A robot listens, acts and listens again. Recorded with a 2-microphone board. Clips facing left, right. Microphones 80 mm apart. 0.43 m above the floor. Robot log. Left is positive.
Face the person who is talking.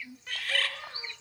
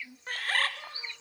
cmd idle
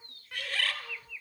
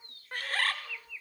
cmd idle
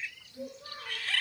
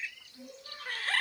note: The child speaking: about 55° left or 125° left.
cmd yaw +55
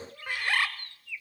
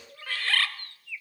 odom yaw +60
note: So it is at 10° right.
cmd yaw -10
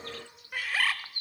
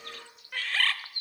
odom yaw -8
cmd idle
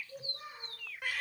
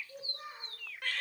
note: The child speaking is now 15° right.
cmd yaw -15
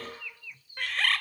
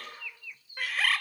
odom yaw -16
cmd idle
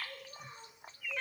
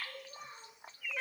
end: Found it: a child speaking, straight ahead.